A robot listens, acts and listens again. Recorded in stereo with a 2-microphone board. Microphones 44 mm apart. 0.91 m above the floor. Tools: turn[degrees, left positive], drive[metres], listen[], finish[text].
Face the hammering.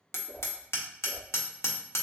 Action: turn[90]
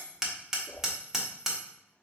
Thought: So it is at 10° right.
Action: turn[-10]
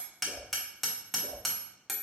Action: finish[Facing the hammering, 1 to 2 m away.]